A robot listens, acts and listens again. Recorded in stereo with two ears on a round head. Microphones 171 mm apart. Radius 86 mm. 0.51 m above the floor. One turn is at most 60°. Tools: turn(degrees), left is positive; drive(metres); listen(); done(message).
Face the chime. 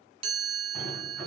turn(degrees=-30)
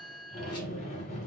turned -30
done("Facing the chime.")